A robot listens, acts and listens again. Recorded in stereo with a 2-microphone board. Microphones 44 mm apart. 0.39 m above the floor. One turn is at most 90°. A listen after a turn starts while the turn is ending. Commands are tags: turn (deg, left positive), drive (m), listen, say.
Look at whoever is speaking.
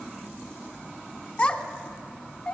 <turn deg="30"/>
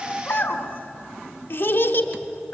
<turn deg="90"/>
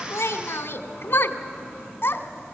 <turn deg="55"/>
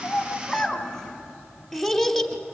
<say>Facing the child speaking.</say>